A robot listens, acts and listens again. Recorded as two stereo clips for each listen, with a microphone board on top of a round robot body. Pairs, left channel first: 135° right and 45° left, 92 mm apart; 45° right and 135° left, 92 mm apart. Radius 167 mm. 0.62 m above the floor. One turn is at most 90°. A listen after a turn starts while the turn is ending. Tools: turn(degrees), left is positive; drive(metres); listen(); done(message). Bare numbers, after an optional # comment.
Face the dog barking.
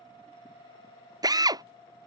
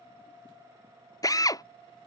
listen()
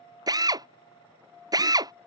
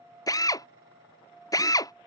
listen()
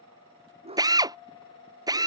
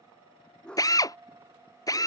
# The dog barking: 35° left.
turn(35)
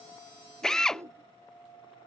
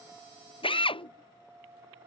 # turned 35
# The dog barking is now 20° right.
turn(-20)
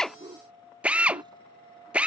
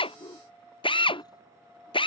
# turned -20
done("Found it: a dog barking, straight ahead.")